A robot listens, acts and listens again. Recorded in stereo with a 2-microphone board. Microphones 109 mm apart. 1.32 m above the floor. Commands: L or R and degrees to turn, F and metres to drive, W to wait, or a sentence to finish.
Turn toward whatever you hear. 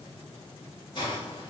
L40
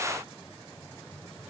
W
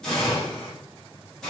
Facing the hiss, 1 to 2 m away.